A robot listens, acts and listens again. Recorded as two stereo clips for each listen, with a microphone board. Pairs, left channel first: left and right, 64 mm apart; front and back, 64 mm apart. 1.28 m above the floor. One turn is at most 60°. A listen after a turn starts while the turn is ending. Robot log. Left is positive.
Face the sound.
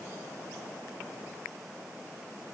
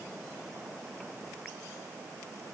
cmd idle
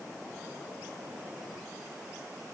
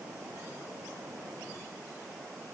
cmd idle
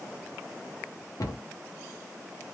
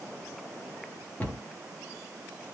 note: The cupboard door: 65° left.
cmd yaw +60
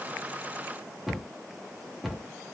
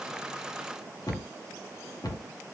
end: Found it: a cupboard door, straight ahead, under 1 m away.